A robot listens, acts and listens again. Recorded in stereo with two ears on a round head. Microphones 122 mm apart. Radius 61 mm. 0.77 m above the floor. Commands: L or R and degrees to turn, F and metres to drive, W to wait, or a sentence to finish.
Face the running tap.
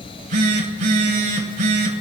W
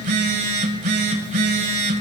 W
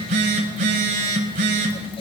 I can't make out a running tap to turn to.